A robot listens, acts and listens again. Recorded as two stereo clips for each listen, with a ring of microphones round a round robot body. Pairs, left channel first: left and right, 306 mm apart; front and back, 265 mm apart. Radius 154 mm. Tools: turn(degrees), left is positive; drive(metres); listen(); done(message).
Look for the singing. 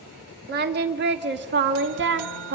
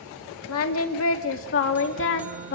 turn(degrees=-45)
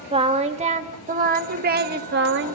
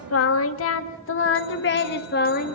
turn(degrees=-50)
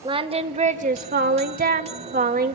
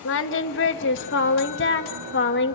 turn(degrees=-35)
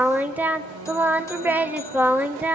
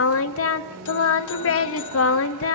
done("Found it: singing, straight ahead, 1 to 2 m away.")